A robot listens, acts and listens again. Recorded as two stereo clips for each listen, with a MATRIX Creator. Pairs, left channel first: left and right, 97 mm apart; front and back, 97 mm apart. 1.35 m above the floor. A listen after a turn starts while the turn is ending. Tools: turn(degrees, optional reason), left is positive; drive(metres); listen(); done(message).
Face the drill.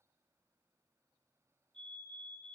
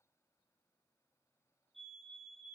listen()
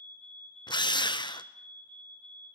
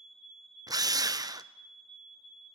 turn(degrees=130, reason="The drill: 130° left.")
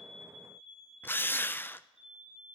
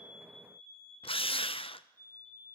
turn(degrees=20, reason="The drill is now 20° left.")
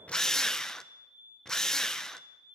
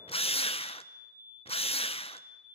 done("Facing the drill, under 1 m away.")